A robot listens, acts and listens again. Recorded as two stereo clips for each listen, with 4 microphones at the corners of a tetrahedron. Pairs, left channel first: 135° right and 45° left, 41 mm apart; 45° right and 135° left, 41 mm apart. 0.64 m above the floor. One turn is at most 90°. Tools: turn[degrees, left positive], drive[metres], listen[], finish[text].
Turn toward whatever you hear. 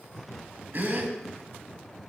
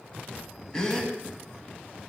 Thought: The gasp: 25° left.
Action: turn[25]
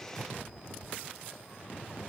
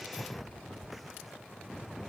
Action: finish[Facing where the gasp came from. I can't hear it now.]